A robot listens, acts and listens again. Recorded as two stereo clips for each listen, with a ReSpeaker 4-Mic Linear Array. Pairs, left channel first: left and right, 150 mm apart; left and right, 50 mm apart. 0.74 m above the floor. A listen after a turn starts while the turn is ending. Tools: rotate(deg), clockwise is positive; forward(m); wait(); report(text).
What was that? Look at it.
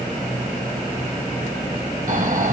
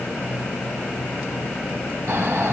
rotate(60)
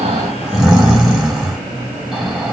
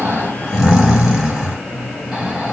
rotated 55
report("Found it: snoring, straight ahead.")